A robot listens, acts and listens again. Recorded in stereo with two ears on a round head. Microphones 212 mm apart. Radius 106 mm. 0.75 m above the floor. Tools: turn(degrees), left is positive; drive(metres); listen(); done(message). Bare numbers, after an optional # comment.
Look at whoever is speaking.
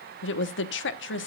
# The woman speaking: about 50° left or 130° left.
turn(50)
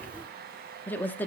# So it is at 10° left.
turn(10)
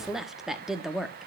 done("Found it: a woman speaking, straight ahead.")